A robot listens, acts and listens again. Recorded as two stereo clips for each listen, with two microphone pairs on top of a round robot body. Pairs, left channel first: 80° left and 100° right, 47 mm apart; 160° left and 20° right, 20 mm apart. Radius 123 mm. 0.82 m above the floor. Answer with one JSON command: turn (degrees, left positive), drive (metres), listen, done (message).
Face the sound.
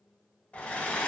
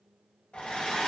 {"turn": 135}
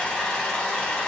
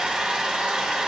{"turn": 10}
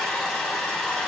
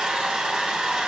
{"done": "Found it: a hair dryer, straight ahead, under 1 m away."}